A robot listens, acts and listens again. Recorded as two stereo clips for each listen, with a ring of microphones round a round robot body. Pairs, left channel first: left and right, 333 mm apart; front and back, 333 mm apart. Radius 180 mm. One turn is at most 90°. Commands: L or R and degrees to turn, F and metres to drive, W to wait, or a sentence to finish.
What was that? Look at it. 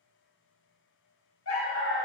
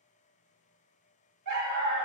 L90
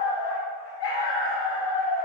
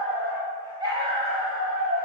L90
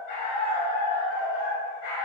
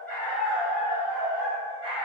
L75
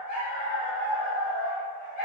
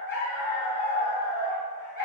L20
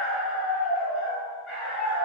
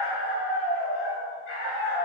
Facing the dog barking.